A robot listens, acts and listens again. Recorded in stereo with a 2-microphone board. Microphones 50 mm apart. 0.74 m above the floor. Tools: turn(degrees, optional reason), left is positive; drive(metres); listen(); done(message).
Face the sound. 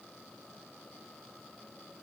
listen()
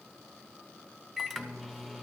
turn(degrees=-30)
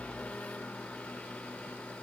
turn(degrees=25, reason="So it is at 25° left.")
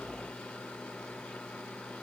turn(degrees=20, reason="The microwave is now 20° left.")
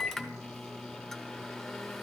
done("Found it: a microwave, straight ahead.")